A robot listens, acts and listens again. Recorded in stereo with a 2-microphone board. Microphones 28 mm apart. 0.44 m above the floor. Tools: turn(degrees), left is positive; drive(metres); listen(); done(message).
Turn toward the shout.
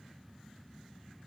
listen()
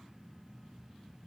listen()
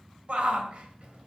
turn(degrees=-50)
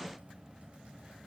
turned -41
listen()
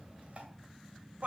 turn(degrees=-80)
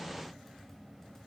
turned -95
turn(degrees=15)
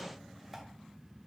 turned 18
listen()
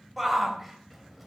done("Facing the shout.")